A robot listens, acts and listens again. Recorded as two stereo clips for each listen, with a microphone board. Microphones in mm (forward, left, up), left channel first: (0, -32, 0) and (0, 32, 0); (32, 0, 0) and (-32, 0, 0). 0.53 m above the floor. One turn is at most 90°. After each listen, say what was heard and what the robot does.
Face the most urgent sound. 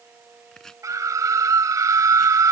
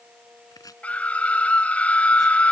The scream: 70° left. Turn 70° left.
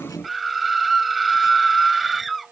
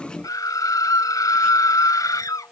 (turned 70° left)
Found it: a scream, straight ahead.